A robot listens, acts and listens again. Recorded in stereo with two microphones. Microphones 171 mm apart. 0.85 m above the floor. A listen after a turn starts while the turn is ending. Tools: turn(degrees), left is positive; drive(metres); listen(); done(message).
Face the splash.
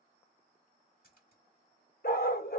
turn(degrees=60)
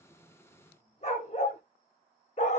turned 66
listen()
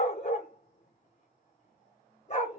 done("I heard a splash, but can't make it out now. It was about 5° right or 55° left.")